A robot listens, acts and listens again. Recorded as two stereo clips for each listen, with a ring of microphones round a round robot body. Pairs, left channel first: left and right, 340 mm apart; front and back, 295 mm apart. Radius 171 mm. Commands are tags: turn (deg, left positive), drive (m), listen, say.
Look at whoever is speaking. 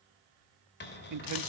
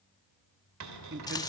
<turn deg="-125"/>
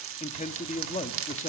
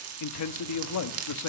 <turn deg="20"/>
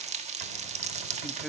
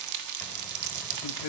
<listen/>
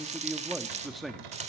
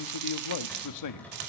<say>Found it: a man speaking, straight ahead.</say>